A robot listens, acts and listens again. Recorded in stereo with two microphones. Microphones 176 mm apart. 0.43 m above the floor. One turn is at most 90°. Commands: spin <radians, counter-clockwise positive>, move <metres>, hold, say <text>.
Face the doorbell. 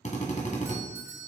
spin -0.26
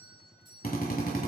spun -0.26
spin -1.57
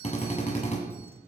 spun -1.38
spin -1.22
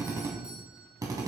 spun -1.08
spin -0.17
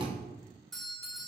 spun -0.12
say Found it: a doorbell, straight ahead.